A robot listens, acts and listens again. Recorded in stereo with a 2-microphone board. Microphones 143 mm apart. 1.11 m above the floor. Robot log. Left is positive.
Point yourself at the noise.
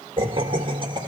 note: The laughter: about 30° right or 150° right.
cmd yaw -30
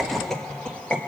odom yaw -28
note: So it is at 10° left.
cmd yaw +10
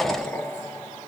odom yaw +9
note: The laughter is now 20° left.
cmd yaw +20
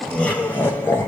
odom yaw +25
note: The laughter is now 20° left.
cmd yaw +20
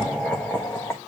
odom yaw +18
note: The laughter is now 15° left.
cmd yaw +15
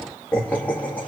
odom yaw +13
note: The laughter is now 15° left.
cmd yaw +15
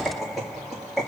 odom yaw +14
end: Found it: laughter, straight ahead.